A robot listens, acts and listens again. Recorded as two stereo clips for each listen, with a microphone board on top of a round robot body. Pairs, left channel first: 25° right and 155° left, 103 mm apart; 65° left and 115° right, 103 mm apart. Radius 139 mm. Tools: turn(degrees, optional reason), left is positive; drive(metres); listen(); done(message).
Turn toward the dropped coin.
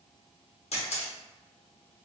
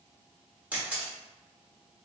listen()
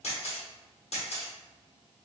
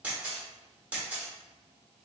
listen()
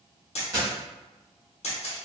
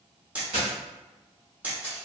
turn(degrees=-140, reason="The dropped coin: 140° right.")
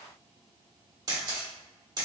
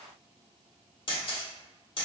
done("Facing where the dropped coin came from. I can't hear it now.")